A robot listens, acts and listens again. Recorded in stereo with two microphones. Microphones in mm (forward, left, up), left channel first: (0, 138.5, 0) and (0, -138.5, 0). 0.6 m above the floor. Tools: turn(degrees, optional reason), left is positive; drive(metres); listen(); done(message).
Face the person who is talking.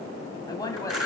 turn(degrees=30)
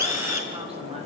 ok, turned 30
listen()
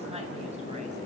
listen()
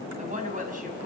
turn(degrees=-30, reason="So it is at 30° right.")
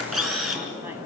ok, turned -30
listen()
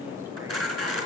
listen()
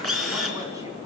done("I heard a woman speaking from this way, but can't make it out now.")